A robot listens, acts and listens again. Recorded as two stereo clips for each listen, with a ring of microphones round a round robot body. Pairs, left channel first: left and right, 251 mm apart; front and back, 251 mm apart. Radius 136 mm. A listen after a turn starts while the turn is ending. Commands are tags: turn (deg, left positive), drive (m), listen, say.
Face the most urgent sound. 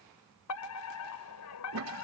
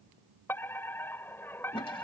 <turn deg="80"/>
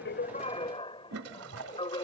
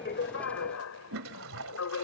<turn deg="20"/>
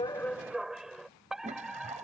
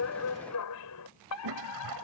<say>Found it: a fire alarm, straight ahead.</say>